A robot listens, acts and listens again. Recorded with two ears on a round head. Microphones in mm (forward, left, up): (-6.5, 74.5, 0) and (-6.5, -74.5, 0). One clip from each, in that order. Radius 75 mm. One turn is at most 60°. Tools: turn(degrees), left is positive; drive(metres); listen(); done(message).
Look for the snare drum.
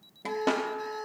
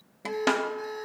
turn(degrees=-50)
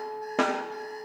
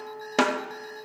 turn(degrees=-60)
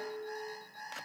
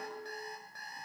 turn(degrees=-20)
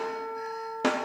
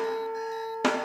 turn(degrees=-15)
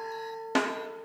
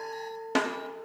done("Found it: a snare drum, straight ahead, 1 to 2 m away.")